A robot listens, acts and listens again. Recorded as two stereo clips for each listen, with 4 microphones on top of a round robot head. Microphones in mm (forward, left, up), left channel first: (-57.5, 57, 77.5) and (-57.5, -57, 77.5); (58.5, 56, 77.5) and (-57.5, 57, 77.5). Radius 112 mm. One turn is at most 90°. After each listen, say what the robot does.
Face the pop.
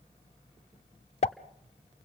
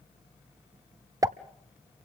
Turn 90° left.
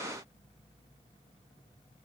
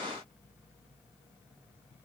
Turn 30° left.
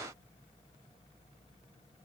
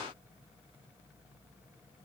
Facing where the pop came from. I can't hear it now.